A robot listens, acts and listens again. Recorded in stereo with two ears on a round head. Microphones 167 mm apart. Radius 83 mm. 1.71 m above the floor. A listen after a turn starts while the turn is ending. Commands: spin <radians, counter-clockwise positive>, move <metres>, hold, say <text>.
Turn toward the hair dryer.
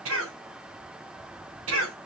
hold
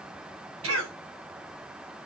hold
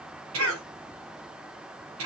say I can't make out a hair dryer, only a cough.